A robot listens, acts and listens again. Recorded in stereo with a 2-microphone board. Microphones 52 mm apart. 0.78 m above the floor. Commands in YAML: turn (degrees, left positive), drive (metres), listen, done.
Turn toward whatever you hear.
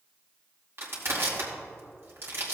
turn: -55
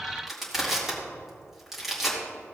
done: "Found it: crushing, straight ahead, 2 to 4 m away."